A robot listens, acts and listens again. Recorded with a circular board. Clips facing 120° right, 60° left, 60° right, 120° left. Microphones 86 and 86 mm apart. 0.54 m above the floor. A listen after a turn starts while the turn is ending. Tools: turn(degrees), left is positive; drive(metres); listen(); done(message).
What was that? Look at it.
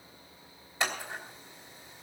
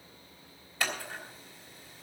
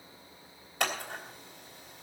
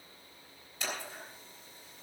turn(degrees=-55)
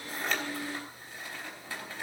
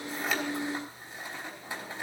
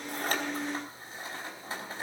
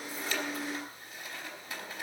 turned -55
turn(degrees=-10)
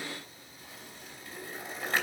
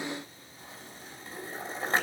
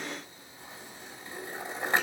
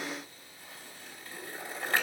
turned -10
done("Found it: scissors, straight ahead, 2 to 4 m away.")